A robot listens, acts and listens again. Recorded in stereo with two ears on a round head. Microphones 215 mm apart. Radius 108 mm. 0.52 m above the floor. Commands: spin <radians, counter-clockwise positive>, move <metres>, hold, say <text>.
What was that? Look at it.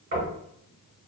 spin -0.70
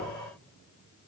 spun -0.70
hold
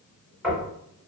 say Facing the knocking.